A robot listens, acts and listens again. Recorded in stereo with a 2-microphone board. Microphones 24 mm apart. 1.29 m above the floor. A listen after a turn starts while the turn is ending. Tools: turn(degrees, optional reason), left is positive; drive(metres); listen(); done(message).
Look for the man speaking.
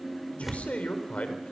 turn(degrees=60, reason="The man speaking: about 60° left or 120° left.")
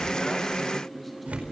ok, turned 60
listen()
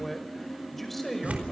done("Found it: a man speaking, straight ahead.")